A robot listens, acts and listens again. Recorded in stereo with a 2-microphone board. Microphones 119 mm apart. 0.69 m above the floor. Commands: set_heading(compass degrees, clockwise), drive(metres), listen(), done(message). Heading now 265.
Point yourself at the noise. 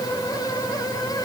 listen()
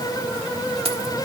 set_heading(320)
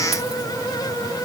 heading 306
listen()
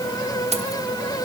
set_heading(21)
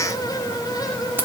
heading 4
set_heading(24)
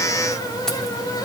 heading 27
listen()
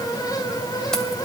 listen()
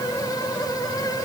done("I heard keys jangling from this way, but can't make it out now.")